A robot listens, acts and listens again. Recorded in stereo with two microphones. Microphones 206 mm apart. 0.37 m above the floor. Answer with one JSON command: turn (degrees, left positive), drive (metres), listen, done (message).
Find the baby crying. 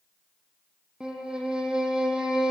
{"listen": true}
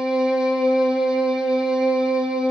{"listen": true}
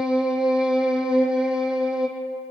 {"done": "I can't make out a baby crying, only a violin."}